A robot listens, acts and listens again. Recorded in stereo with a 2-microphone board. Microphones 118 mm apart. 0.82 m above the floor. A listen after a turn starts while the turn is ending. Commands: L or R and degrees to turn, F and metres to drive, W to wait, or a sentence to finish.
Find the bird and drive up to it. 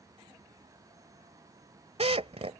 W
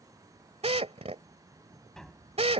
W
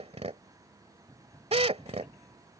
I can't make out a bird to turn to.